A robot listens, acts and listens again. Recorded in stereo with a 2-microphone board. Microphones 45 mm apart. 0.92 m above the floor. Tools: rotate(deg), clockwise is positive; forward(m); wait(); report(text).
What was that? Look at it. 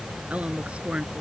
rotate(25)
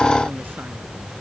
wait()
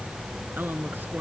rotate(135)
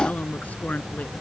rotate(-30)
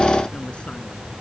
wait()
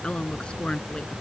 rotate(-20)
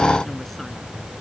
wait()
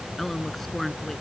report("Facing the woman speaking.")